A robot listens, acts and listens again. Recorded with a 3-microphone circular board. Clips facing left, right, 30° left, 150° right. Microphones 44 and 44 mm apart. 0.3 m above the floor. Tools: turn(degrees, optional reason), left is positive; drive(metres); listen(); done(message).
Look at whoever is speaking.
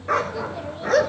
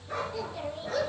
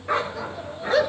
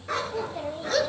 turn(degrees=180, reason="The child speaking: straight behind.")
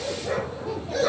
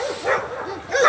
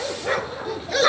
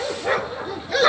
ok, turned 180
listen()
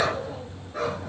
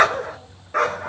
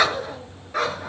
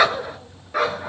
listen()
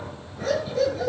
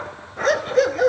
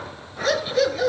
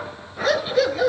done("I heard a child speaking from this way, but can't make it out now.")